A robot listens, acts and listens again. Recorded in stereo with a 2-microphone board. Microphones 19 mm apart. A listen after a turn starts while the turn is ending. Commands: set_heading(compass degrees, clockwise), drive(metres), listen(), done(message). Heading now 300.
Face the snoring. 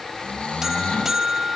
set_heading(210)
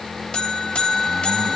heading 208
listen()
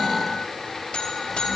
listen()
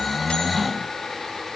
done("Facing the snoring.")